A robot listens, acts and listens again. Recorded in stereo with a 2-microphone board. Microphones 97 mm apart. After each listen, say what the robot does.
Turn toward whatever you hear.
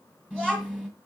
Turn 30° left.
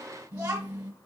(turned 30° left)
Turn 15° right.
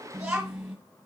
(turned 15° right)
Found it: a child speaking, straight ahead, 1 to 2 m away.